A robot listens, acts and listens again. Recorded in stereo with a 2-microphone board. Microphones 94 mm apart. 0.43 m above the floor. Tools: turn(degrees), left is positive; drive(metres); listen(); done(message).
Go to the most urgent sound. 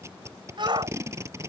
turn(degrees=-60)
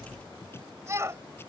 turn(degrees=-35)
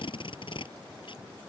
listen()
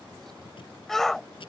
drive(metres=1.0)
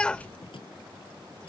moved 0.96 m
turn(degrees=15)
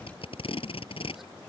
listen()
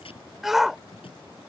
drive(metres=1.0)
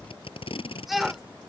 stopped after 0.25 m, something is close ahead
done("Arrived at the shout, straight ahead.")